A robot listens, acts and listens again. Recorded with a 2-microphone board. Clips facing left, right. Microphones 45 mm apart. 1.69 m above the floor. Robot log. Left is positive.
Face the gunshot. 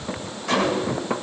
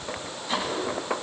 cmd yaw +90
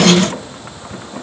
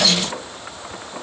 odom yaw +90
end: Facing where the gunshot came from. I can't hear it now.